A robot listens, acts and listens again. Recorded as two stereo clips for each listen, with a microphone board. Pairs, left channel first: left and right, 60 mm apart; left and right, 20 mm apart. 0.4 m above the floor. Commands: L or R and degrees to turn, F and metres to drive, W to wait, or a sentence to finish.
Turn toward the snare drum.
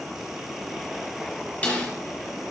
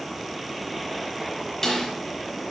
L25
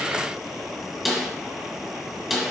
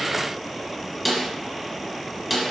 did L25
Found it: a snare drum, straight ahead.